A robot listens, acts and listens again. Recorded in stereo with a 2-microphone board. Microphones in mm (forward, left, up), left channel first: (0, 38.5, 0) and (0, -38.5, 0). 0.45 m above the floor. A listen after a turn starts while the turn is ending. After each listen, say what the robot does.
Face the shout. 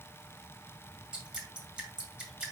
Keep listening.
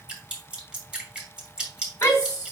Turn 40° left.
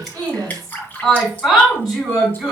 Facing the shout.